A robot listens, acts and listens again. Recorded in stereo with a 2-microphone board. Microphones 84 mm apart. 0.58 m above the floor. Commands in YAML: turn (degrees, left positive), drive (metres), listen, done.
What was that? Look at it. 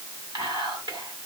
turn: -60
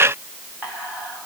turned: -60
turn: -25
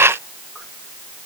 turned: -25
listen: true
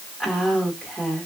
done: "Facing the whispering."